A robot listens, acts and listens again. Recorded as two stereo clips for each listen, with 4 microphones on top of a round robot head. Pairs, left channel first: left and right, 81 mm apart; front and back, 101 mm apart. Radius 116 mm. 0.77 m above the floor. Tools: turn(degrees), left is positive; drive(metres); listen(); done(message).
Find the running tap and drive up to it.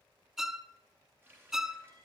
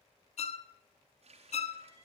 turn(degrees=-160)
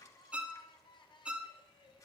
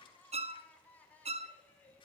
listen()
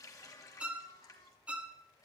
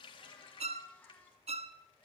turn(degrees=40)
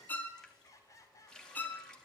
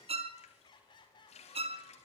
drive(metres=1.0)
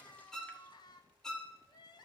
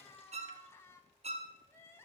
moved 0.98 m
listen()
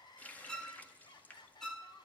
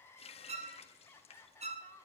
turn(degrees=20)
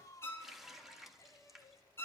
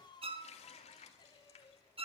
drive(metres=1.0)
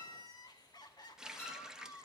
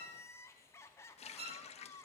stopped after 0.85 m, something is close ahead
turn(degrees=-10)
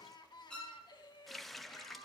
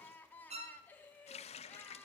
done("I am next to the running tap.")